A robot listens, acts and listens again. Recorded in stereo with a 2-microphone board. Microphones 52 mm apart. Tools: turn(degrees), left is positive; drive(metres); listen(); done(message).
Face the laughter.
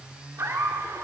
turn(degrees=-90)
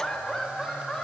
turn(degrees=10)
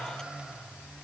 listen()
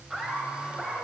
done("Found it: laughter, straight ahead, over 4 m away.")